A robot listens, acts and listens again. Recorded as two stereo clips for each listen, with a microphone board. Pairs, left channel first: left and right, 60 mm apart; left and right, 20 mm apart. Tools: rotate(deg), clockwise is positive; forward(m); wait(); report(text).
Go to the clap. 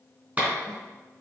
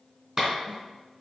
rotate(20)
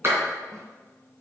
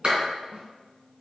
rotate(135)
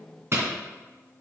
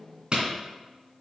rotate(45)
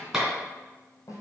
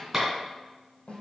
rotate(10)
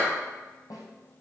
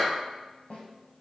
wait()
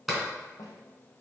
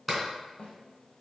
forward(1.0)
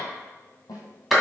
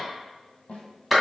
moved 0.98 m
forward(1.0)
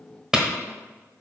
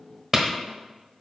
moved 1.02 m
rotate(10)
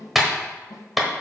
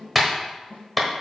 forward(1.0)
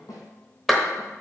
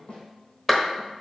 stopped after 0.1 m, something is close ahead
report("Arrived at the clap, straight ahead.")